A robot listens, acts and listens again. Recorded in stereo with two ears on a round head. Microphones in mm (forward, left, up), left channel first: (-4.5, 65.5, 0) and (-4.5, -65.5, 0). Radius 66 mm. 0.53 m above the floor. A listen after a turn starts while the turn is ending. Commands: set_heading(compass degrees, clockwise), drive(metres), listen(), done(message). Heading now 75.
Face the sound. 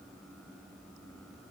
listen()
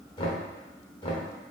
set_heading(40)
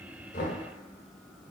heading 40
set_heading(295)
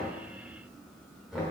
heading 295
done("Found it: knocking, straight ahead.")